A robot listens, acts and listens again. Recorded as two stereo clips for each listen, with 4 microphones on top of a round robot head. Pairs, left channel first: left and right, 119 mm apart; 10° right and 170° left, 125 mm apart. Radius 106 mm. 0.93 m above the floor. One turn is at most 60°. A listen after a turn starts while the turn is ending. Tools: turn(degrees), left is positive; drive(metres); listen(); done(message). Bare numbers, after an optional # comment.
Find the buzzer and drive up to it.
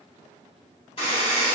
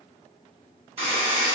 # The buzzer: 135° left.
turn(60)
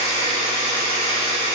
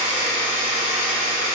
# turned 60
# The buzzer is now 100° left.
turn(60)
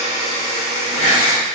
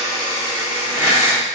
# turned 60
# The buzzer is now 50° left.
turn(50)
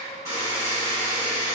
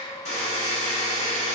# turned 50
drive(1.0)
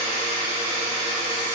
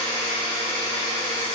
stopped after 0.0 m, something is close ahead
done("Blocked. The buzzer is further on, straight ahead.")